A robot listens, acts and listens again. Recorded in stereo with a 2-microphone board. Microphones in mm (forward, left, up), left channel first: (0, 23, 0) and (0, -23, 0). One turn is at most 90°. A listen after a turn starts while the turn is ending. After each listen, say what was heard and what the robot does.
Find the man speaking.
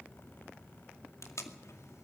Keep listening.
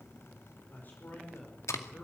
The man speaking: about 40° left or 140° left. Turn 40° left.
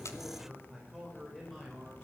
Facing the man speaking.